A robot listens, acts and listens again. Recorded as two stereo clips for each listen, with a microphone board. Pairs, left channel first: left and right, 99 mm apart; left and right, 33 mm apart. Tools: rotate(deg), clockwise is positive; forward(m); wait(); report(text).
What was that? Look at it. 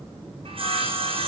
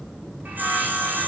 rotate(65)
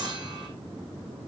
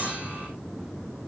wait()
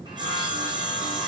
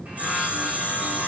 rotate(50)
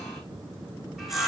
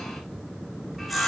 report("Found it: sawing, straight ahead, over 4 m away.")